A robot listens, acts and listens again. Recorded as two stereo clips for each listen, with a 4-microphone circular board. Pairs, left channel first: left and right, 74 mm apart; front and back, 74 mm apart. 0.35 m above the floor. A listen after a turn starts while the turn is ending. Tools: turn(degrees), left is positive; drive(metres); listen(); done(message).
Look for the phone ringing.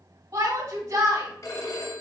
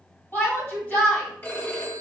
turn(degrees=55)
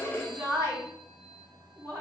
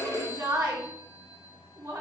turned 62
turn(degrees=-10)
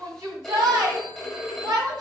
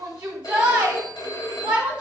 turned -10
done("Found it: a phone ringing, straight ahead.")